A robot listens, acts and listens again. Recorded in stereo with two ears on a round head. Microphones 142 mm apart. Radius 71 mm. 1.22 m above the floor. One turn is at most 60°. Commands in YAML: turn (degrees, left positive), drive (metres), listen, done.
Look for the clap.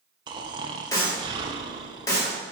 turn: 20
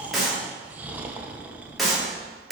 done: "Facing the clap, 2 to 4 m away."